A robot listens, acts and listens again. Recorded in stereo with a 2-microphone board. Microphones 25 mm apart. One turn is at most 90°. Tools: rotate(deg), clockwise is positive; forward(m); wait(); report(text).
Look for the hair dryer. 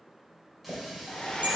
rotate(-40)
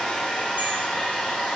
rotate(-90)
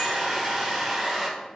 rotate(-10)
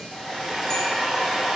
report("Facing the hair dryer, 1 to 2 m away.")